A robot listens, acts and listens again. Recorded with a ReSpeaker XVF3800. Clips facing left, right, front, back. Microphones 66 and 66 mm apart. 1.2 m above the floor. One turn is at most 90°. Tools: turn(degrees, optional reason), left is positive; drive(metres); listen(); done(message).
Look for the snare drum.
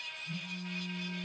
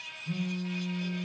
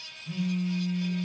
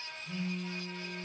listen()
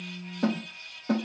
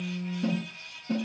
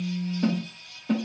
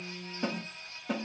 turn(degrees=90, reason="The snare drum: 95° left.")
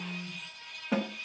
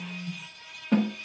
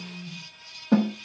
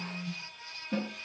done("Found it: a snare drum, straight ahead.")